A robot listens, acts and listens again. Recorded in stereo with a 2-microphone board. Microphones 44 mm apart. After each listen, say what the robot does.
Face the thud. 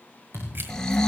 Turn 70° right.
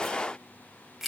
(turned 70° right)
Keep listening.
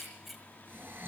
I heard a thud, but can't make it out now. It was about straight ahead or 40° right.